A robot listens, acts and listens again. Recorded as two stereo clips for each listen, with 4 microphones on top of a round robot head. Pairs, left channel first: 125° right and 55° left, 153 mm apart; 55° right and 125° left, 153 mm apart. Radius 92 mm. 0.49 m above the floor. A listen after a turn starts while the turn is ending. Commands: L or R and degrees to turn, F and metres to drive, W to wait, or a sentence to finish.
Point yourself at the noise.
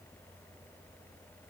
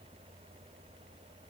W
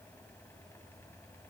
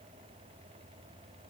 W
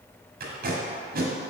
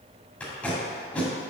L25
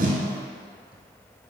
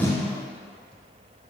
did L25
W
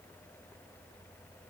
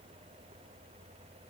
W
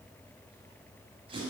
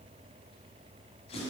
Facing the tape being pulled.